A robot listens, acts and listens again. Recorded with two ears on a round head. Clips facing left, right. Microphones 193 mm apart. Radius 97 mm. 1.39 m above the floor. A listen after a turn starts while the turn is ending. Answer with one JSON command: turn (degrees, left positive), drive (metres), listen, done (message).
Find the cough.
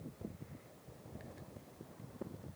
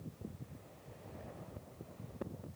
{"listen": true}
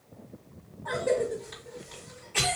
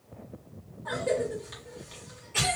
{"turn": -15}
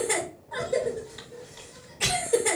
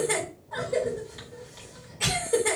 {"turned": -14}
{"done": "Facing the cough, 2 to 4 m away."}